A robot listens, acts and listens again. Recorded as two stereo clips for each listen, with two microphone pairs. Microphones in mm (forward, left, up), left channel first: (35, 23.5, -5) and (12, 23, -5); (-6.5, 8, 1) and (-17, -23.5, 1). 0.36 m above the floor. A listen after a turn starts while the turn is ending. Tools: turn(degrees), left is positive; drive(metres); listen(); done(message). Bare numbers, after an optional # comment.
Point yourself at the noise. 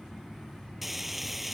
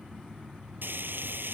# The frying: 100° right.
turn(-100)
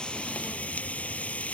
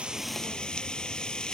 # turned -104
done("Found it: frying, straight ahead.")